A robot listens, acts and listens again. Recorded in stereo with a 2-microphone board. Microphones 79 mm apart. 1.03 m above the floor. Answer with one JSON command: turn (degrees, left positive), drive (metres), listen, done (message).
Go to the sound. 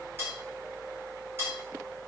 {"turn": -30}
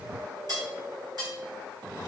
{"turn": -120}
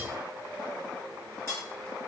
{"turn": -35}
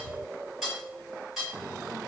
{"drive": 1.0}
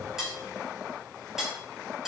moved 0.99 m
{"drive": 1.0}
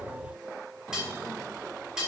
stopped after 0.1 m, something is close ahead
{"turn": -10}
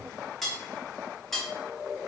{"done": "Arrived at the cutlery clinking, straight ahead."}